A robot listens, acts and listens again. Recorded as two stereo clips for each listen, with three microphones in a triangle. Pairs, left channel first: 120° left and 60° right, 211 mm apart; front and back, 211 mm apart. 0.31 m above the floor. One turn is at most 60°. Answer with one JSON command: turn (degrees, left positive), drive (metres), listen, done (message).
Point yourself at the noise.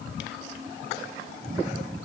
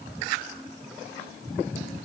{"listen": true}
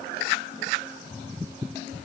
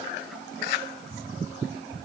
{"listen": true}
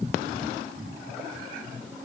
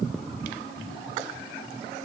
{"done": "I can't make out anything to turn to."}